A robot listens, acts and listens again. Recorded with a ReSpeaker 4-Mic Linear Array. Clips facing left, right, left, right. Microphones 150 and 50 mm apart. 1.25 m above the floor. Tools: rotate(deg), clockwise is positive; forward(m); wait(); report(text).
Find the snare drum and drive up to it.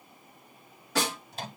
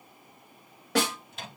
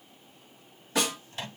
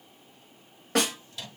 rotate(90)
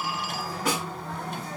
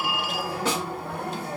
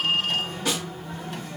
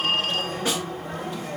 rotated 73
rotate(30)
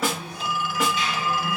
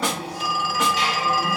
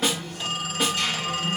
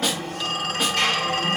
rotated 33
forward(1.0)
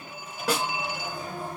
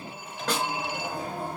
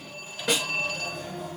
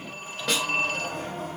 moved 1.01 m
rotate(-10)
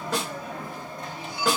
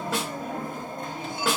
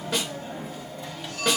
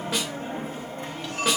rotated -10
forward(1.0)
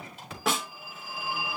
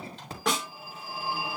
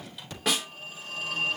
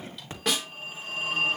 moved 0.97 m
forward(1.0)
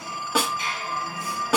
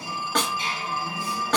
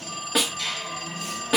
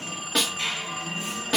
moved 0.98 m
rotate(-10)
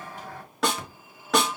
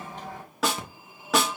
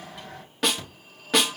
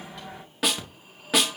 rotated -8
forward(1.0)
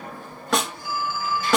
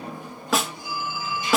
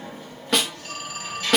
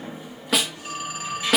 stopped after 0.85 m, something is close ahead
report("Arrived at the snare drum, straight ahead.")